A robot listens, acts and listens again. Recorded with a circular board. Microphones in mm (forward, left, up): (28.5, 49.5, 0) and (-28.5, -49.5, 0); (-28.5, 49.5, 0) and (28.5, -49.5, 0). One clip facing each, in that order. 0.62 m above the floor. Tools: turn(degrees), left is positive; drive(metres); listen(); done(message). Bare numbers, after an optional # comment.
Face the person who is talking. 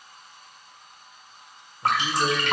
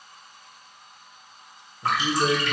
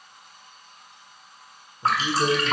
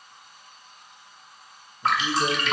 # The man speaking: 145° left.
turn(145)
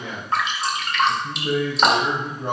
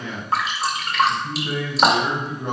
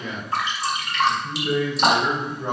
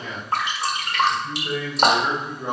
# The man speaking is now 20° left.
turn(20)
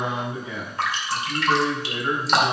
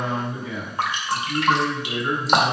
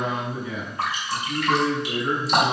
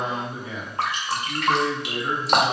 done("Found it: a man speaking, straight ahead, 2 to 4 m away.")